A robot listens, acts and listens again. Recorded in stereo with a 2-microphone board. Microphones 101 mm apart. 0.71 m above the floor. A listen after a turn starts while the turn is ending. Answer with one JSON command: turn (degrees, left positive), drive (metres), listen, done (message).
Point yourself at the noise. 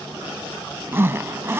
{"turn": -25}
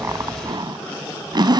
{"turn": -130}
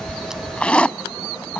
{"turn": 10}
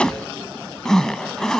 {"done": "Found it: a zipper, straight ahead."}